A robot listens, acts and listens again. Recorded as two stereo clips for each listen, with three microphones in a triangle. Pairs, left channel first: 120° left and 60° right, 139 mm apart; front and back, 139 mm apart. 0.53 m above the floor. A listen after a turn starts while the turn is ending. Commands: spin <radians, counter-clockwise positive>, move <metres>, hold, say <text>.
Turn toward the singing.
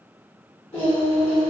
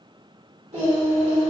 spin 2.71
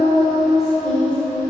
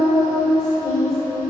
spin 0.96
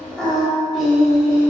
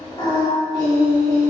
spin 0.79
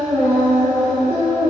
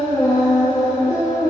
say Facing the singing.